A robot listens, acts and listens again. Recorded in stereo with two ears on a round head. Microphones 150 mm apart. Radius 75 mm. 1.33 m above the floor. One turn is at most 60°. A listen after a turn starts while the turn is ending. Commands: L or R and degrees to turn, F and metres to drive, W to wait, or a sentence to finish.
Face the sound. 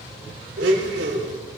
R60
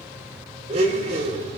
R40
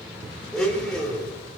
Found it: a blender, straight ahead, over 4 m away.